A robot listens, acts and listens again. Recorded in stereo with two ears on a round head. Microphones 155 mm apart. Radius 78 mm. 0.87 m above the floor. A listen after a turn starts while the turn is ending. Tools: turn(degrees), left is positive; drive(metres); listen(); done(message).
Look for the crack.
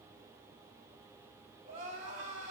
listen()
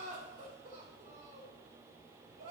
listen()
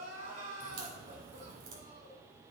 turn(degrees=-90)
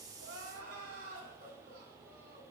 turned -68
turn(degrees=-20)
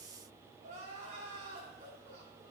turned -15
done("Facing where the crack came from. I can't hear it now.")